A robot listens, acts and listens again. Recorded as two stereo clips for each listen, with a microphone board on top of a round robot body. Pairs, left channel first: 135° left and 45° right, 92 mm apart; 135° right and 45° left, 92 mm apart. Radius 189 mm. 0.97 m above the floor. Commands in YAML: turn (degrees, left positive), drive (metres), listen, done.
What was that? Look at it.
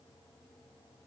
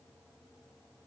listen: true
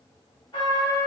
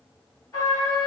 turn: 170
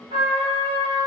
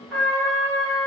turn: -45
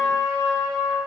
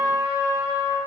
done: "Found it: a trumpet, straight ahead."